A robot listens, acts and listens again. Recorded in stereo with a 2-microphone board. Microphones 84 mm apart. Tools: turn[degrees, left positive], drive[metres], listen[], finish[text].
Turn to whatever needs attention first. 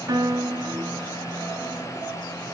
Action: listen[]
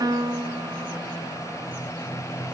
Action: listen[]
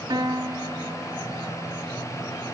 Action: finish[I can't make out anything urgent, only a piano.]